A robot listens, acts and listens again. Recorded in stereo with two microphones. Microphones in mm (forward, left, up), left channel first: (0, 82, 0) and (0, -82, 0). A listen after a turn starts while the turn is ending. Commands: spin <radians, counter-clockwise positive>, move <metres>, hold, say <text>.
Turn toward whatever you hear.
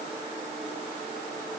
hold
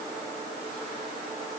hold
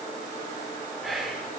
spin 0.52
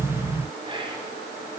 spin -0.52
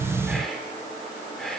say Facing the whispering, 2 to 4 m away.